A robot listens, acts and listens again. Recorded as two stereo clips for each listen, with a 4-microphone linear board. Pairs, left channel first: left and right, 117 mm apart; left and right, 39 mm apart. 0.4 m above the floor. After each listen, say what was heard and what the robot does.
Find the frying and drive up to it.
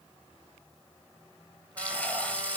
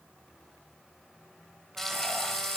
Turn 30° left.
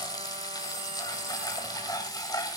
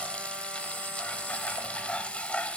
So it is at 140° left. Turn 140° left.
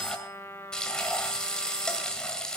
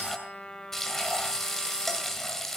Drive 1.0 m forward.
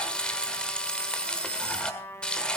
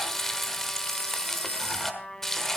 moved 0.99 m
The frying is now 15° left. Turn 15° left.
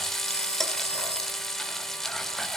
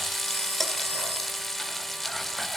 Drive 1.0 m forward.
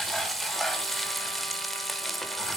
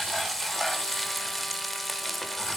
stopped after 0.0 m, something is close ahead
Arrived at the frying, straight ahead.